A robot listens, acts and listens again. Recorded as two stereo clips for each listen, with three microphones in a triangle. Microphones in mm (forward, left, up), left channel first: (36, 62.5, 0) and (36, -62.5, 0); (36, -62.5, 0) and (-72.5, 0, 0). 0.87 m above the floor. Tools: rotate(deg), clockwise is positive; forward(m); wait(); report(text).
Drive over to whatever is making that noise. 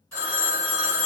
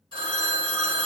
rotate(-20)
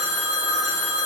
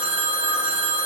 forward(1.0)
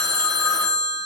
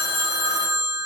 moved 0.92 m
rotate(-10)
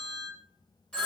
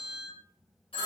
forward(1.0)
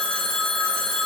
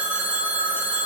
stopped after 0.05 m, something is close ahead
report("Arrived at the phone ringing, straight ahead.")